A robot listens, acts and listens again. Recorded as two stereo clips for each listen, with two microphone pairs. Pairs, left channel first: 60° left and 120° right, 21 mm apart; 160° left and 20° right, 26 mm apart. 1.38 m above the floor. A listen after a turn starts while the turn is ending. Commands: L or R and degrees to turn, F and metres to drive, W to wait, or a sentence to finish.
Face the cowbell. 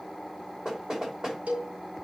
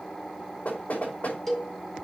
R115
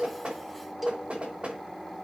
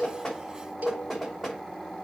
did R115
R40
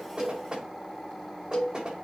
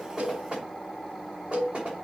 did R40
Facing the cowbell, 2 to 4 m away.